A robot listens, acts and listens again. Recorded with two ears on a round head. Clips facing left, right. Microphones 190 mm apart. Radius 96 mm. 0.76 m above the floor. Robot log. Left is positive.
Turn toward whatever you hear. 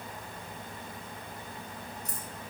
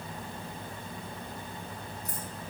cmd yaw +90
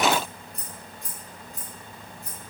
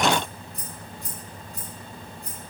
end: Facing the keys jangling.